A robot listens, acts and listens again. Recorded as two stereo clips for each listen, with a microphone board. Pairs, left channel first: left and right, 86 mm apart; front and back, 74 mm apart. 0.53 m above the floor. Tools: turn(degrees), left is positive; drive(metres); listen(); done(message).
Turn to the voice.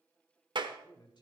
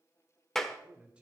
turn(degrees=110)
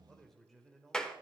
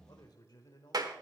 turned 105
done("Found it: a man speaking, straight ahead, 1 to 2 m away.")